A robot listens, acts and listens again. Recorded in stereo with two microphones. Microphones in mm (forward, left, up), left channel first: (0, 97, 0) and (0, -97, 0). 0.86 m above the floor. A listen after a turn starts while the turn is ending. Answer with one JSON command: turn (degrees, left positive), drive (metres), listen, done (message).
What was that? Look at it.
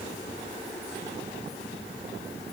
{"listen": true}
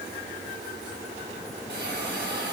{"turn": -65}
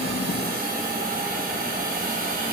{"turn": -50}
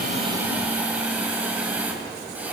{"turn": -10}
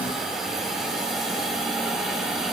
{"done": "Found it: a hiss, straight ahead."}